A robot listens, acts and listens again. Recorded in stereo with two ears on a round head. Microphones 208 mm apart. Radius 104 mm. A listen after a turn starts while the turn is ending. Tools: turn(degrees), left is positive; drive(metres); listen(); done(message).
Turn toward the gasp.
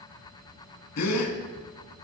turn(degrees=90)
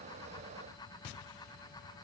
done("Facing where the gasp came from. I can't hear it now.")